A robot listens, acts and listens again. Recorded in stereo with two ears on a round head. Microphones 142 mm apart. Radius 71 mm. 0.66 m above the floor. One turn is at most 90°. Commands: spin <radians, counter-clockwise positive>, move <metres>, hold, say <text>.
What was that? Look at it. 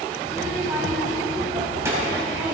spin -0.26
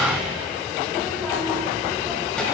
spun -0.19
spin 0.52
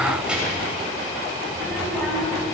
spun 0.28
spin 0.52
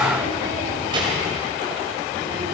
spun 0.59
spin -0.52
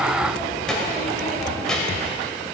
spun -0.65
say Facing the child speaking.